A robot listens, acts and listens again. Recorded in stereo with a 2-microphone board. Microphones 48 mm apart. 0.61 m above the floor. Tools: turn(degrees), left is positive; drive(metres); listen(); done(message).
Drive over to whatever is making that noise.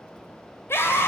turn(degrees=60)
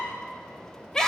turn(degrees=10)
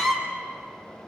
drive(metres=1.0)
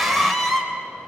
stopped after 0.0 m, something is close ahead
done("Blocked. The scream is further on, straight ahead.")